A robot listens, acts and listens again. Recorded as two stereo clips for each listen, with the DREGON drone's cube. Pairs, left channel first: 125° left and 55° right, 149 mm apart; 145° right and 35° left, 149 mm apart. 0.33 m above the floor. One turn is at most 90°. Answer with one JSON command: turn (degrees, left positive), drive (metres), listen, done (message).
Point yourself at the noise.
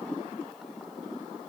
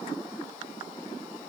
{"listen": true}
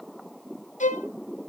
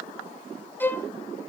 {"turn": 90}
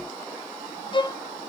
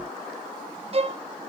{"turn": 75}
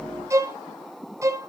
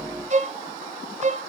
{"turn": 10}
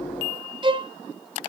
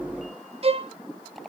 {"done": "Facing the violin."}